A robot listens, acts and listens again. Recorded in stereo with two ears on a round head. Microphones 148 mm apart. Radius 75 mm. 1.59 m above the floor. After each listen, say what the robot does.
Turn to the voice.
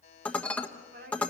Turn 65° right.
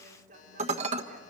Turn 50° right.
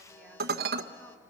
Keep listening.
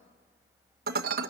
Keep listening.
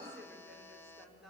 Facing the woman speaking.